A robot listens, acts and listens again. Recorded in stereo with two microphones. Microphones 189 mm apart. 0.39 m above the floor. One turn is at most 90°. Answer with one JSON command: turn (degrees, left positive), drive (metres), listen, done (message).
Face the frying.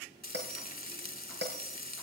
{"turn": 55}
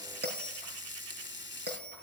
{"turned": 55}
{"turn": 75}
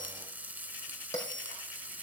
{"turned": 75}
{"turn": -10}
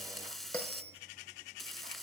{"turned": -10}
{"done": "Facing the frying."}